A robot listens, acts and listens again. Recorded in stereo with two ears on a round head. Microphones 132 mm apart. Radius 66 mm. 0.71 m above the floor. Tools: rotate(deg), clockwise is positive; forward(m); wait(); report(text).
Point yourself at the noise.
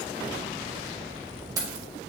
rotate(25)
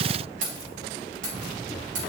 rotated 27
rotate(120)
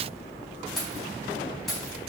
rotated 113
report("Found it: keys jangling, straight ahead, 2 to 4 m away.")